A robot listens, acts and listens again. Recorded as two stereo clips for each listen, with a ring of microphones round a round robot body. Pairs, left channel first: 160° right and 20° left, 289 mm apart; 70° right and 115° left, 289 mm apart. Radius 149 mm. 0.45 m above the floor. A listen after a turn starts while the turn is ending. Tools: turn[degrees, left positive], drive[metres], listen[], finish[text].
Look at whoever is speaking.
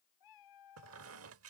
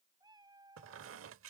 Action: listen[]
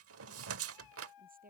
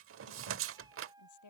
Thought: The woman speaking: 40° right.
Action: turn[-40]
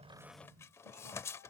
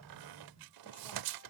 Action: listen[]
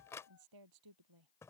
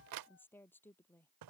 Thought: The woman speaking is now 15° left.
Action: turn[15]
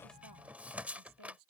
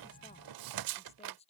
Action: finish[Facing the woman speaking.]